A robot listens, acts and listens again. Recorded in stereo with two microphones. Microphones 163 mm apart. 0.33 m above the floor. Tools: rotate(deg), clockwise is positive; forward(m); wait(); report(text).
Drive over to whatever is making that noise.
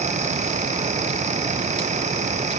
wait()
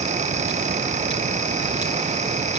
wait()
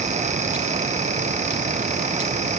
report("I can't make out anything.")